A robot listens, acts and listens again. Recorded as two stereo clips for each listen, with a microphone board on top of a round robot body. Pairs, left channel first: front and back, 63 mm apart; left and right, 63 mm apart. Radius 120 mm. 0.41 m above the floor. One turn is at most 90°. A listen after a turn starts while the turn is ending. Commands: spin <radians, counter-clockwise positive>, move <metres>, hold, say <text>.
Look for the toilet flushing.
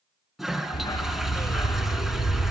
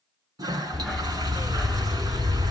spin -1.57
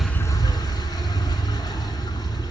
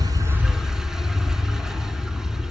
hold
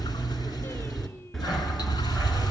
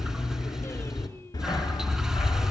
hold
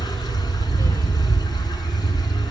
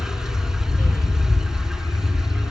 say Facing where the toilet flushing came from. I can't hear it now.